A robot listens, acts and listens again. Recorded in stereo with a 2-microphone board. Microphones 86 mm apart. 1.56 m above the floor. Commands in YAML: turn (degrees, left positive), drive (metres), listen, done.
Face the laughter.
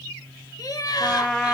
turn: 50
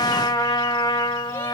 listen: true
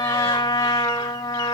listen: true
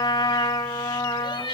turn: 60
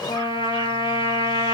listen: true
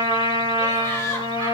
turn: 15
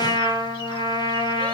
listen: true
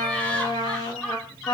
done: "Found it: laughter, straight ahead, 2 to 4 m away."